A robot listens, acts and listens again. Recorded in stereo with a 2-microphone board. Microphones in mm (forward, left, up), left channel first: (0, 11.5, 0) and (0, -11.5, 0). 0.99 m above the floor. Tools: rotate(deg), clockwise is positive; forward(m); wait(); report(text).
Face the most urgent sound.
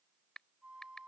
wait()
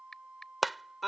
rotate(30)
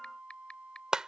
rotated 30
rotate(150)
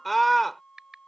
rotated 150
report("Found it: a scream, straight ahead.")